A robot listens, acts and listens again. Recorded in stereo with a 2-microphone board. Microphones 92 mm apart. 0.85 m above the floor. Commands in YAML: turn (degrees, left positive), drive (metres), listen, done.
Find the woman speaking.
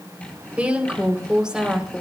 turn: -30
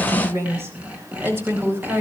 turn: -160
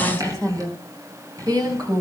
turn: -45
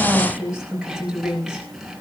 turn: -10
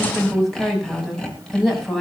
done: "Found it: a woman speaking, straight ahead, over 4 m away."